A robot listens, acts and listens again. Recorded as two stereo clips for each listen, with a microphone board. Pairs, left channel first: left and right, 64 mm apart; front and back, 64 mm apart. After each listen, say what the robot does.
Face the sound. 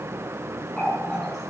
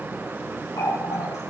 Found it: a running tap, straight ahead.